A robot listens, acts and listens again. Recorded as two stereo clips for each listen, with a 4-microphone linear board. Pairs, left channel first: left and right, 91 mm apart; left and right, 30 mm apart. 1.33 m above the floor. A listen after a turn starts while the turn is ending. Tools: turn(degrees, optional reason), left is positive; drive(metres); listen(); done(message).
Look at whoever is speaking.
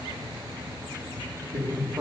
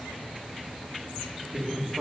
turn(degrees=-45, reason="The man speaking: about 45° right or 135° right.")
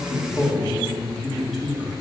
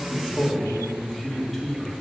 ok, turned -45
done("Facing the man speaking.")